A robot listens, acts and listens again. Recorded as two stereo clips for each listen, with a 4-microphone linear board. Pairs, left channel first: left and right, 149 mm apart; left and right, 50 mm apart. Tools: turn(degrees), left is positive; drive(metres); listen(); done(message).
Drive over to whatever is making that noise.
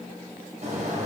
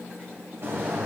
turn(degrees=-55)
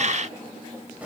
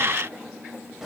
turn(degrees=-10)
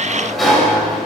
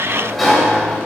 drive(metres=1.0)
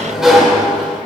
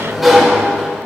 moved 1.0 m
drive(metres=1.0)
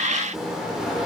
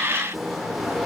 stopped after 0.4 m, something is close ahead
done("I am next to the sliding door.")